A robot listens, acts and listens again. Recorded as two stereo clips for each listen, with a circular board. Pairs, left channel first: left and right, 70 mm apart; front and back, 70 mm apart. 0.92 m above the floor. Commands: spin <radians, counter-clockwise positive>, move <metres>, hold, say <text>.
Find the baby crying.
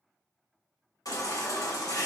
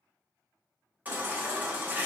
spin 2.01
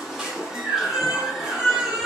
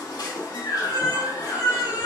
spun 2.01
say Facing the baby crying.